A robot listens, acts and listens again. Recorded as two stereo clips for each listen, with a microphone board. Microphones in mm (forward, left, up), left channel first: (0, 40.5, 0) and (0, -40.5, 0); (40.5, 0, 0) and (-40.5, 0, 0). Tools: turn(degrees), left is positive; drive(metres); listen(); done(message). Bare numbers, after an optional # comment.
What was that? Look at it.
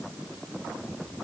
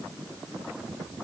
listen()
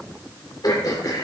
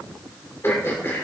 # The throat clearing: 55° left.
turn(55)
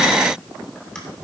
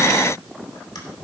listen()
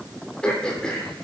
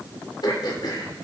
# The throat clearing is now 10° left.
turn(10)
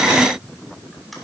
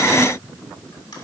done("Found it: throat clearing, straight ahead.")